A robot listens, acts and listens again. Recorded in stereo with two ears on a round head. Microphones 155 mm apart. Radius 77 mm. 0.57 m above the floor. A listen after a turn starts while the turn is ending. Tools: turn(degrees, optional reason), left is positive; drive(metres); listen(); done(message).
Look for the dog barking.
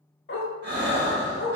turn(degrees=60, reason="The dog barking: about 60° left or 120° left.")
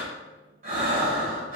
listen()
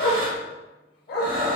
turn(degrees=60, reason="So it is at 60° left.")
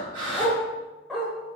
done("Facing the dog barking.")